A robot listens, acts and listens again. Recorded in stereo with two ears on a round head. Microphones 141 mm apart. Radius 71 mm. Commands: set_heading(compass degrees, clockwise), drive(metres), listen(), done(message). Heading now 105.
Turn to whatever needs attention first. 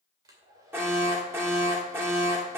set_heading(120)
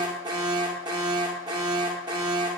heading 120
set_heading(270)
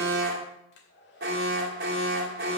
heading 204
set_heading(269)
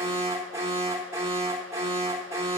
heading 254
set_heading(269)
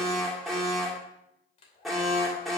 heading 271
done("Found it: an alarm, straight ahead, 2 to 4 m away.")